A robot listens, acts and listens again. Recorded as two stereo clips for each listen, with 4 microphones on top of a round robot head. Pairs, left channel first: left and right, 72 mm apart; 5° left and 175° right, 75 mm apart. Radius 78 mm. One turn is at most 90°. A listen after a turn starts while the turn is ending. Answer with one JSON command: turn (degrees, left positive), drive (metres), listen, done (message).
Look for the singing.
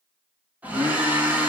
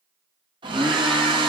{"turn": -90}
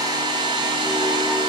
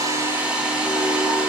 {"turn": -45}
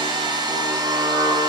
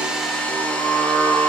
{"turn": -85}
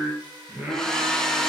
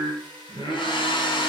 {"turn": -25}
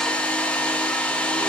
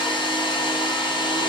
{"listen": true}
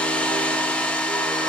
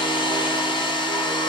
{"listen": true}
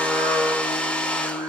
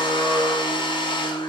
{"turn": -20}
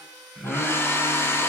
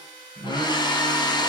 {"done": "Found it: singing, straight ahead, 2 to 4 m away."}